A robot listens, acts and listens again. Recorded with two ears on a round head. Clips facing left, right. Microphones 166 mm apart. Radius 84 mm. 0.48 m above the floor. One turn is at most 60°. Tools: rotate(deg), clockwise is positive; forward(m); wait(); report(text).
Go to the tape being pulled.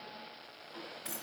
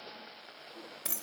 wait()
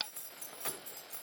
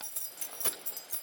wait()
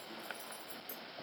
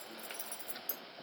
report("I can't make out tape being pulled to turn to.")